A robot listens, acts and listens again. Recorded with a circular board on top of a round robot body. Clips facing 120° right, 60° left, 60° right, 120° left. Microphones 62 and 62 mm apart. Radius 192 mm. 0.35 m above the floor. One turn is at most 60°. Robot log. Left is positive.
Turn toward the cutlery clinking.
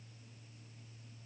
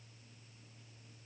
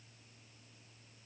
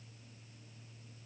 cmd idle
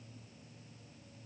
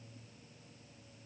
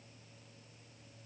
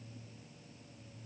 cmd idle
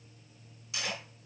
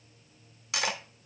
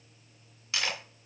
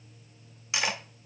note: The cutlery clinking: 50° left.
cmd yaw +50
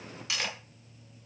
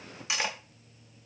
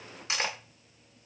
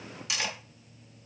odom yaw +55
end: Facing the cutlery clinking.